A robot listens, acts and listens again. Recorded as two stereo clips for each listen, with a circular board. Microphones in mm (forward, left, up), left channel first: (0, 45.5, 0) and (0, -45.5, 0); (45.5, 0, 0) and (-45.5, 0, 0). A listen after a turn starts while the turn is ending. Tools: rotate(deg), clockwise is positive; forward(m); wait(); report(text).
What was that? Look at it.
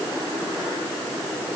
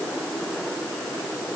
wait()
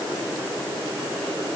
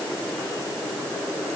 wait()
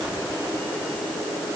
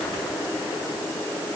report("I can't make out anything to turn to.")